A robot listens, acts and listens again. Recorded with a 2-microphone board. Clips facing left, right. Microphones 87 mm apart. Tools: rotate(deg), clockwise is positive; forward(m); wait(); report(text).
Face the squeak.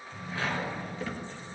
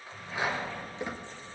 rotate(20)
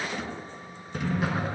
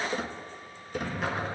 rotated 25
rotate(135)
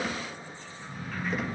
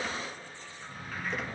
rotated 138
report("Found it: a squeak, straight ahead.")